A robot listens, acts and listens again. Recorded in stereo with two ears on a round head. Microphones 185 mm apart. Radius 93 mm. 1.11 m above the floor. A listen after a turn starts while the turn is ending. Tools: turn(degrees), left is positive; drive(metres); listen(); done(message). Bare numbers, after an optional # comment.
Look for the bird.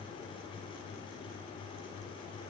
listen()
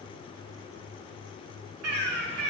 turn(-90)
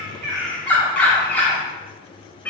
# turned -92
# So it is at 10° left.
turn(10)
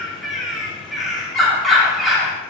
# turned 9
done("Facing the bird.")